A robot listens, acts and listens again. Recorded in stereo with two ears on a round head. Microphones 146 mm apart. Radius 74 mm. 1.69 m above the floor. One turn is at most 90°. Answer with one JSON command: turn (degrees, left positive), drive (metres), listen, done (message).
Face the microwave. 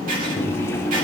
{"turn": 15}
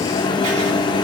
{"turn": 90}
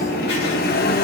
{"turn": 60}
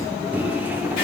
{"turn": -10}
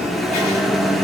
{"done": "Found it: a microwave, straight ahead."}